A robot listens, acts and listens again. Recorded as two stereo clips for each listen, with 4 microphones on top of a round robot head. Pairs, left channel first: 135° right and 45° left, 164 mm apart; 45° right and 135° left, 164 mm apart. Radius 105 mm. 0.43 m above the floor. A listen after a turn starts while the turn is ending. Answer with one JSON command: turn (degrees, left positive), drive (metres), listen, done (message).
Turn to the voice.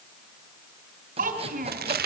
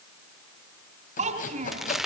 {"turn": 85}
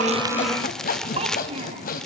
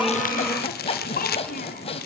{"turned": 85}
{"done": "Found it: a child speaking, straight ahead, 2 to 4 m away."}